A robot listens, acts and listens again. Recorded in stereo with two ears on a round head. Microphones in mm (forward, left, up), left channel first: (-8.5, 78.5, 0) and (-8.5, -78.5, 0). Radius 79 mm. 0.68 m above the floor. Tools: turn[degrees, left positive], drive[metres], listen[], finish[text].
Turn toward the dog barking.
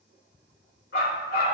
Thought: The dog barking: about 60° left or 120° left.
Action: turn[60]
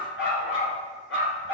Thought: So it is at 75° left.
Action: turn[75]
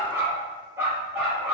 Thought: The dog barking is now 10° right.
Action: turn[-10]
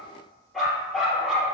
Action: finish[Facing the dog barking, over 4 m away.]